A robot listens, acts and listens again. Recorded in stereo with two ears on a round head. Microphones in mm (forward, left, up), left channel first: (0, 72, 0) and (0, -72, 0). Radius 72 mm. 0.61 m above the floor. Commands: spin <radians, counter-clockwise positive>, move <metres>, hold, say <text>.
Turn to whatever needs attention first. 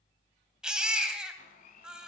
spin -0.52
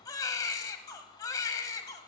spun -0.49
spin 0.44
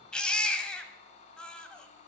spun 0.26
say Facing the baby crying, 1 to 2 m away.